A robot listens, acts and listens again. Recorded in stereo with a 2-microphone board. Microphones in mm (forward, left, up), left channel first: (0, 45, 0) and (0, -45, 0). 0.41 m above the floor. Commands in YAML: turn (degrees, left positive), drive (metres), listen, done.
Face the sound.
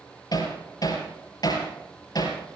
turn: 50
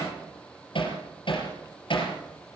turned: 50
turn: 80
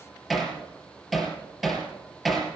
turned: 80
done: "Facing the hammering."